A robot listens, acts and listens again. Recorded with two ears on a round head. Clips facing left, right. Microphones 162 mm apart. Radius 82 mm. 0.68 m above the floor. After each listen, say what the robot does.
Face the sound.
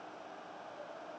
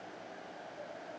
Keep listening.
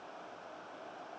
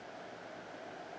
Keep listening.
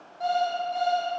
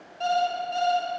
Turn 35° right.
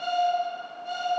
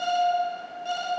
Turn 110° right.
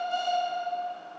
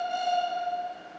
Turn 10° right.
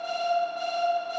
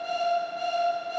Found it: an alarm clock, straight ahead, 2 to 4 m away.